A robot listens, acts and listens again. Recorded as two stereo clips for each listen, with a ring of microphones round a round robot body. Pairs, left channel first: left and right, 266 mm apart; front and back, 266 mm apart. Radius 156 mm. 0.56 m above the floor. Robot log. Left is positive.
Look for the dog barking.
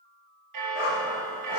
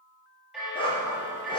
note: The dog barking: 70° left.
cmd yaw +70
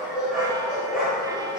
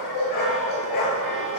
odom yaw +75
end: Found it: a dog barking, straight ahead.